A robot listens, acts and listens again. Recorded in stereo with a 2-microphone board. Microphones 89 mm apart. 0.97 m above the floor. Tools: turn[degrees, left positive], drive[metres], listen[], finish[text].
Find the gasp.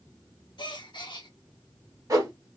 Thought: The gasp: about 55° left or 125° left.
Action: turn[55]
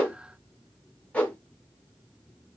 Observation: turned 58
Action: listen[]
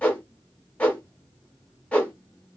Action: finish[I heard a gasp, but can't make it out now. It was about straight ahead or 65° left.]